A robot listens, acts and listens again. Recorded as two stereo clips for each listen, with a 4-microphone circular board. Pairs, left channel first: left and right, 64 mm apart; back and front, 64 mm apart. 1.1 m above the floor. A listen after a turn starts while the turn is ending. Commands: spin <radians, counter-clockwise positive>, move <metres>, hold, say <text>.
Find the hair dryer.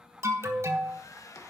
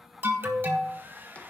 spin 1.05
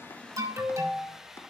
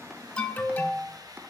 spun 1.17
say Found it: a hair dryer, straight ahead.